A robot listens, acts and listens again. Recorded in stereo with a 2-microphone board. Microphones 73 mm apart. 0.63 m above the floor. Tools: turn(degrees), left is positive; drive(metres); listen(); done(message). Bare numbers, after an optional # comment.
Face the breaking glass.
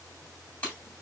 # The breaking glass: about 20° left or 160° left.
turn(20)
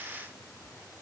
listen()
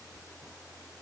done("I heard breaking glass, but can't make it out now. It was about straight ahead or 140° left.")